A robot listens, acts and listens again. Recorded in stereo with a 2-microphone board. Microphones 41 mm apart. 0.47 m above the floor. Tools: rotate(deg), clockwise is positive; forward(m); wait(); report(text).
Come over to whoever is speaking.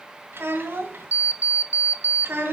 rotate(70)
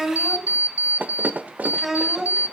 rotate(10)
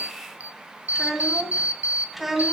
forward(1.0)
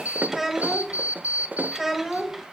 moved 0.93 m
rotate(10)
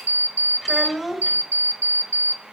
forward(1.0)
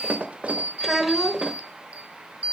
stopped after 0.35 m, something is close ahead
report("I am next to the child speaking.")